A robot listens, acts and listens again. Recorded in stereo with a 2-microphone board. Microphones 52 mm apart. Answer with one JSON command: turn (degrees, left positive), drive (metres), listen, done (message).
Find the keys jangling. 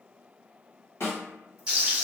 {"listen": true}
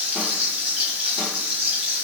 {"listen": true}
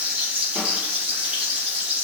{"done": "I can't make out keys jangling, only a snare drum and frying."}